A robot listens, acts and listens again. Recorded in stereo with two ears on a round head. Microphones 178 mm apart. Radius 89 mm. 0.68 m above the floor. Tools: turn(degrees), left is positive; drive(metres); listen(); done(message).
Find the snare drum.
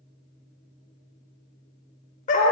listen()
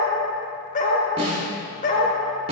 turn(degrees=-30)
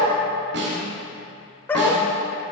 turn(degrees=-125)
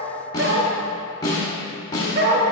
turn(degrees=20)
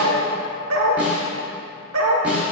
done("Facing the snare drum, 1 to 2 m away.")